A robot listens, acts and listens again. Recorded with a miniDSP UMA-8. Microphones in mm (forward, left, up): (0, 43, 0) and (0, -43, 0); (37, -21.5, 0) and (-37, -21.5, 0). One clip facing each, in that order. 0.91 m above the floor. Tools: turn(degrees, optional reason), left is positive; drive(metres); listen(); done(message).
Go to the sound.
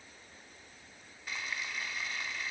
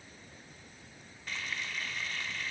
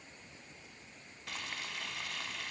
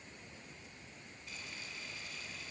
drive(metres=1.0)
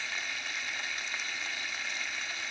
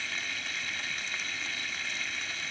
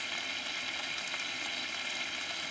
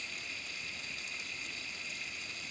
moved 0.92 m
drive(metres=1.0)
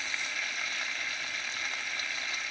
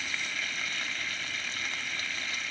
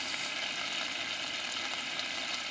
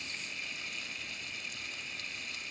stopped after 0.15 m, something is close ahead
done("I am next to the frying.")